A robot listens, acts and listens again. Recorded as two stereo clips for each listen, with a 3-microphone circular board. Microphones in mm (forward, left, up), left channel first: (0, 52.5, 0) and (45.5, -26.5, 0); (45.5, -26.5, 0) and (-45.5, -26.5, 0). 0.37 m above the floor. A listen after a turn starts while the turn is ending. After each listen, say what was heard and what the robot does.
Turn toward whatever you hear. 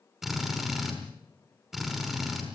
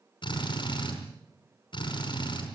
The drill: 25° left. Turn 25° left.
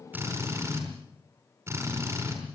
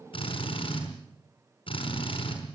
Facing the drill.